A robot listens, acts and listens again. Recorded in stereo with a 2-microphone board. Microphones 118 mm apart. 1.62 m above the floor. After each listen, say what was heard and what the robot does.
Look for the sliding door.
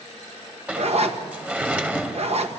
Turn 30° right.
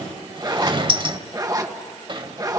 So it is at 135° right. Turn 135° right.
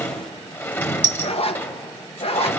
The sliding door is now 20° left. Turn 20° left.
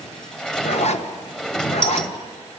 Facing the sliding door, 1 to 2 m away.